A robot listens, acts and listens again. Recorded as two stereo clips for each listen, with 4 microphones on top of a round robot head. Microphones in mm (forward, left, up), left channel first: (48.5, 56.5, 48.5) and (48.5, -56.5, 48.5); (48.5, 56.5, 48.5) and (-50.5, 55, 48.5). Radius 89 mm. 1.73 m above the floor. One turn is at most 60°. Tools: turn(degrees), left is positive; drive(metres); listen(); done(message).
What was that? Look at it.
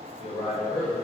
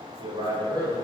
turn(degrees=60)
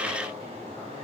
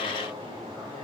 turn(degrees=50)
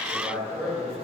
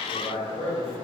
turn(degrees=-10)
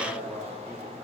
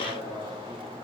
done("Facing the man speaking.")